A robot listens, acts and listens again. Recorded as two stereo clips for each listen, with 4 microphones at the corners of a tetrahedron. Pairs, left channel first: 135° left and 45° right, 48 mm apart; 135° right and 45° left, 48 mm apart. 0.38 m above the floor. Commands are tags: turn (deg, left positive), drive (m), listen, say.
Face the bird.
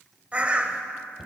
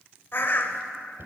<turn deg="-100"/>
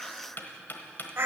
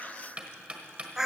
<turn deg="-35"/>
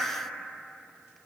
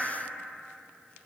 <turn deg="-30"/>
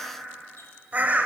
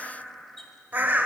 <say>Found it: a bird, straight ahead, under 1 m away.</say>